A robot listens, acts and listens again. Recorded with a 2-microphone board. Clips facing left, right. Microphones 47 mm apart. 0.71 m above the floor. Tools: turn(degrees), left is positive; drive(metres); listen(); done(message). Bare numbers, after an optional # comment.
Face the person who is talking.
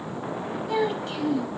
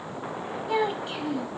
turn(-30)
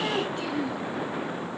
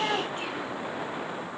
listen()
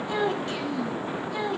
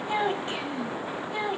# So it is at 155° right.
turn(-155)
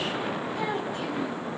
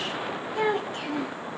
# The child speaking is now 55° right.
turn(-55)
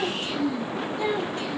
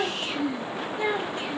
# The child speaking is now 25° right.
turn(-25)
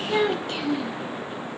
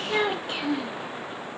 # The child speaking is now 10° right.
turn(-10)
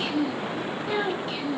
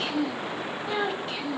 done("Facing the child speaking.")